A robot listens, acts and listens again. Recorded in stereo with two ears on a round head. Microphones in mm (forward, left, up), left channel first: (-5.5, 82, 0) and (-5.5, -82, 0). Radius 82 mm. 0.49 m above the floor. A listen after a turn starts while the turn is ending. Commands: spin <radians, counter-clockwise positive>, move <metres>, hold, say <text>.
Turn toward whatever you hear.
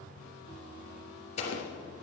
spin 0.70
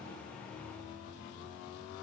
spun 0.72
hold
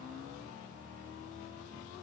say I heard an explosion, but can't make it out now. It was about 5° right or 100° left.